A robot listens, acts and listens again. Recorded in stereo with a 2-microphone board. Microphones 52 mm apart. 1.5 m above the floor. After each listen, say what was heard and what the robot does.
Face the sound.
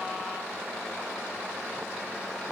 Keep listening.
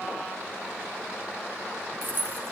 The keys jangling: about 40° right or 140° right. Turn 40° right.
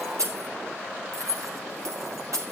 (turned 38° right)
So it is at 105° right. Turn 105° right.
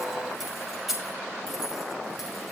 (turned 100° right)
Facing the keys jangling.